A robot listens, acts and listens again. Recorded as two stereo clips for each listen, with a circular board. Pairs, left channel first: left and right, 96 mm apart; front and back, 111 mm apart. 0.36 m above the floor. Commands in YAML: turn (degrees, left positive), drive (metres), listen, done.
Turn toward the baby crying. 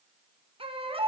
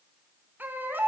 turn: -105
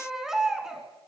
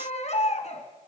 done: "Found it: a baby crying, straight ahead."